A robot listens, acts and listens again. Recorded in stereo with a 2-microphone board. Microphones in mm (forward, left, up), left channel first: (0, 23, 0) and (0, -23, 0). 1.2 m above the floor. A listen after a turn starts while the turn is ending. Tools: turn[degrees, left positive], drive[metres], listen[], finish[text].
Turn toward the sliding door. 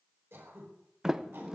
Action: turn[-30]
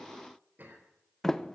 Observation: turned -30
Thought: So it is at 15° left.
Action: turn[15]
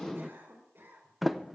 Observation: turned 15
Action: finish[Facing the sliding door, under 1 m away.]